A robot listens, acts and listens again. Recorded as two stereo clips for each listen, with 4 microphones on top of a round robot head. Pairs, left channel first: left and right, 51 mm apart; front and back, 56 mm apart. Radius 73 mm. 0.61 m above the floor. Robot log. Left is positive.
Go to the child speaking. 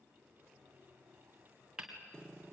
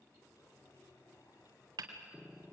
cmd idle
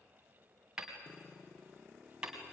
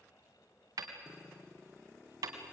cmd idle
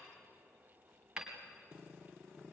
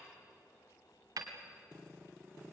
end: I can't make out a child speaking to turn to.